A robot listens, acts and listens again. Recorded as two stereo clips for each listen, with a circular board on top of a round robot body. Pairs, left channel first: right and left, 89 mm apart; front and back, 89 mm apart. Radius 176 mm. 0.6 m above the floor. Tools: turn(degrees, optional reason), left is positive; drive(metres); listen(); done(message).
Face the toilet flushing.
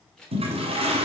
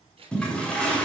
turn(degrees=80, reason="The toilet flushing: 80° left.")
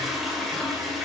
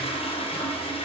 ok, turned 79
done("Found it: a toilet flushing, straight ahead, 2 to 4 m away.")